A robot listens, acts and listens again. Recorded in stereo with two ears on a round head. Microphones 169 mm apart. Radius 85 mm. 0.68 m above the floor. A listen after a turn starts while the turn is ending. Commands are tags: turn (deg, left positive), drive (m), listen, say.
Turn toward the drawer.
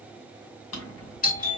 <turn deg="90"/>
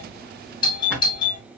<say>Facing the drawer, 1 to 2 m away.</say>